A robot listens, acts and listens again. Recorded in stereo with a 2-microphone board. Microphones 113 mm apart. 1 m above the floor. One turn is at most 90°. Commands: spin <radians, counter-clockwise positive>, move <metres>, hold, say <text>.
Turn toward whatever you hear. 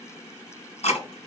spin 1.57
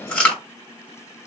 spin 0.17
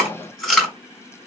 say Facing the chewing.